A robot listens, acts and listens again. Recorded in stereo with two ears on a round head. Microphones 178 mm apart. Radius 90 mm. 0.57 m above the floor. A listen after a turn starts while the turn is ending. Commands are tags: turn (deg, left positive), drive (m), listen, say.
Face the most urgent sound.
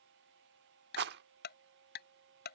<listen/>
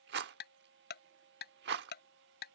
<listen/>
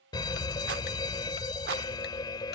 <turn deg="20"/>
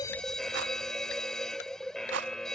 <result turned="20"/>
<say>Found it: a fire alarm, straight ahead.</say>